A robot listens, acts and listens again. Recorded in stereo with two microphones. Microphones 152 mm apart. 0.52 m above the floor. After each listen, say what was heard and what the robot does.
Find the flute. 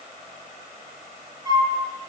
The flute: about 20° right or 160° right. Turn 20° right.
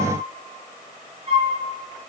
So it is at 140° right. Turn 140° right.
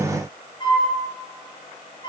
The flute is now 30° left. Turn 30° left.
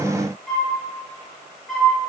Facing the flute, over 4 m away.